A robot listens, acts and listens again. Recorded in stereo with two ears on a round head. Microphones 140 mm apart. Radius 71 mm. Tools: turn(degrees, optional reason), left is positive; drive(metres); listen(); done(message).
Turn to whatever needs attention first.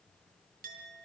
listen()
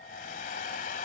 listen()
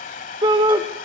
turn(degrees=-30, reason="The shout: about 30° right or 150° right.")
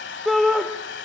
done("Facing the shout, 1 to 2 m away.")